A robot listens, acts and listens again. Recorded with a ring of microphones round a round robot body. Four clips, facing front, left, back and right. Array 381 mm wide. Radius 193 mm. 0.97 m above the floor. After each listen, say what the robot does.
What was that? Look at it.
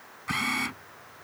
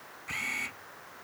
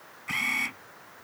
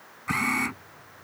Turn 75° right.
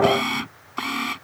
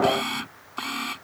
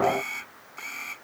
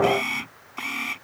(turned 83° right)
Turn 10° left.
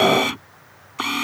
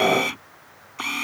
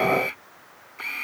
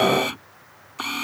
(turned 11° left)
Facing the camera shutter.